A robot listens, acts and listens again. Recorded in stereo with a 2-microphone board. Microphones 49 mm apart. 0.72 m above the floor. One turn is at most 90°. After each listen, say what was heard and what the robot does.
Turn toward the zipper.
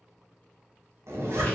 The zipper: about 75° right or 105° right. Turn 75° right.
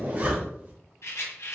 So it is at 30° right. Turn 30° right.
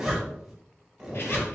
The zipper is now 10° right. Turn 10° right.
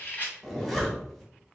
Facing the zipper, 1 to 2 m away.